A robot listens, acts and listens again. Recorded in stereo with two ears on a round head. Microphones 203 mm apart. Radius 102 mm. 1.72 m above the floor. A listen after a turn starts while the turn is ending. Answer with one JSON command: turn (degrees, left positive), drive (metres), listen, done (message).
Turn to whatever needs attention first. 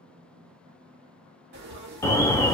{"turn": 30}
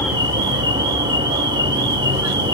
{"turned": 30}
{"turn": -20}
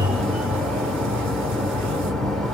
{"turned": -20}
{"done": "Facing the alarm."}